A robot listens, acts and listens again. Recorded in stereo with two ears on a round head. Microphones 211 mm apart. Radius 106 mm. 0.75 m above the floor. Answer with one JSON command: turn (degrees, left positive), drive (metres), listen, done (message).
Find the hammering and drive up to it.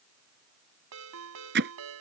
{"turn": -45}
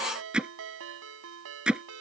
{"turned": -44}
{"drive": 1.0}
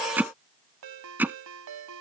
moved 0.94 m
{"turn": -10}
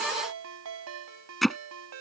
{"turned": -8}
{"drive": 1.0}
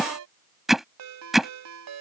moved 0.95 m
{"drive": 1.0}
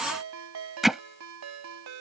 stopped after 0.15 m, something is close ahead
{"done": "Arrived at the hammering, straight ahead."}